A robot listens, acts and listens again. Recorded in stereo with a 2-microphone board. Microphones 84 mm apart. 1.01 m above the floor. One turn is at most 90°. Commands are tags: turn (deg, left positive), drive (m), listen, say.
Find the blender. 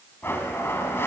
<turn deg="30"/>
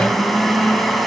<say>Found it: a blender, straight ahead, 2 to 4 m away.</say>